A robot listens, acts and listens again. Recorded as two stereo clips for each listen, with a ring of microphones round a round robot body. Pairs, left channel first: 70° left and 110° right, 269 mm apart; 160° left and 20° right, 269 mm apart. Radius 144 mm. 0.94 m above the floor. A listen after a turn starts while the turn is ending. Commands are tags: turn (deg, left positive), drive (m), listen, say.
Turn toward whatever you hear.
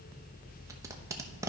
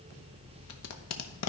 <turn deg="170"/>
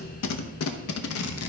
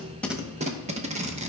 <turn deg="40"/>
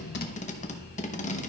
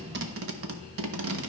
<say>Found it: tape being pulled, straight ahead.</say>